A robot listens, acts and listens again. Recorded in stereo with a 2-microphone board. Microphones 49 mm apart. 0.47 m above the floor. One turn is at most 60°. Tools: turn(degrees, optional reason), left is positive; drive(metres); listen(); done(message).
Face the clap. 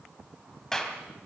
turn(degrees=30)
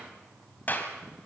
turn(degrees=60, reason="So it is at 140° left.")
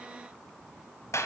turn(degrees=60, reason="The clap is now 85° left.")
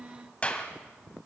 turn(degrees=25, reason="The clap is now 25° left.")
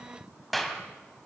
done("Facing the clap.")